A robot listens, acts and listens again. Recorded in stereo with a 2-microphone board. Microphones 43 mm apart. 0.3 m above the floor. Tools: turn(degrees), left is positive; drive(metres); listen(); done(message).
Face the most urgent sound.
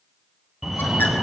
turn(degrees=-30)
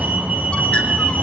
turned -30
turn(degrees=-140)
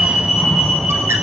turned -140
turn(degrees=-15)
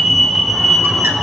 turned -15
done("Facing the fire alarm, over 4 m away.")